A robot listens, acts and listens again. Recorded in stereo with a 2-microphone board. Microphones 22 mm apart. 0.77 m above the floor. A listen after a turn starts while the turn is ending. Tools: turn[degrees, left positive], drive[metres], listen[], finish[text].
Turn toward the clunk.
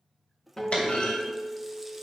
Action: turn[90]
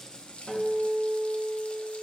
Action: finish[Facing where the clunk came from. I can't hear it now.]